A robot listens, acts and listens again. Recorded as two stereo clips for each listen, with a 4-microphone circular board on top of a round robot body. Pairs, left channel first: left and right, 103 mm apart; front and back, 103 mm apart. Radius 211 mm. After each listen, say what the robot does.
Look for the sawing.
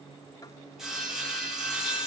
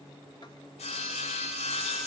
Found it: sawing, straight ahead, 2 to 4 m away.